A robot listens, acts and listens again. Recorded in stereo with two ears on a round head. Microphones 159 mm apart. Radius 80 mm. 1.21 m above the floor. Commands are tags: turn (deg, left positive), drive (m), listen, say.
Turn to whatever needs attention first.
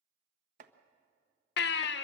<turn deg="65"/>
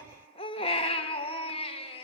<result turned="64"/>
<turn deg="35"/>
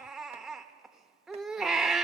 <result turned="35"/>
<say>Facing the baby crying.</say>